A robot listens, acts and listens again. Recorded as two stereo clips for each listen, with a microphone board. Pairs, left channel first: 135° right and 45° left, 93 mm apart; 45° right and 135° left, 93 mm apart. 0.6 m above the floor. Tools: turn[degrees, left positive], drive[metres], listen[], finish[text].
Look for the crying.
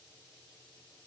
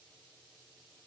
Action: listen[]
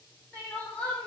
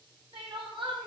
Thought: The crying: 150° left.
Action: turn[150]
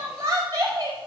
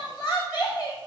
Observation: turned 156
Action: finish[Facing the crying, 2 to 4 m away.]